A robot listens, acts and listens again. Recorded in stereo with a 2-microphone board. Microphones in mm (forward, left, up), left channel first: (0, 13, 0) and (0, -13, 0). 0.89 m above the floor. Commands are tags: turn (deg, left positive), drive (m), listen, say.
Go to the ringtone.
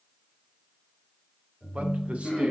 <turn deg="-30"/>
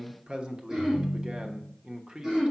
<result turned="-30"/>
<turn deg="-135"/>
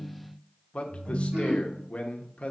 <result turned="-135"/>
<turn deg="-40"/>
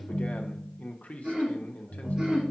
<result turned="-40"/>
<turn deg="10"/>
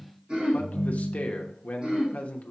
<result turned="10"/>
<drive m="1.0"/>
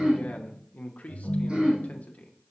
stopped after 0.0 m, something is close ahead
<say>Something is in my way. I am facing the ringtone but have not reached it.</say>